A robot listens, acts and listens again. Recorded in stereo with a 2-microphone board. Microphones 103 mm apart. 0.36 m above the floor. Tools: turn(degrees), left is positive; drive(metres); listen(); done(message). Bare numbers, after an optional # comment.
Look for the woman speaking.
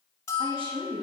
# The woman speaking: about 60° right or 120° right.
turn(-60)
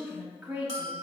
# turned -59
# So it is at 15° right.
turn(-15)
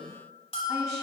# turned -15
listen()
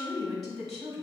done("Found it: a woman speaking, straight ahead.")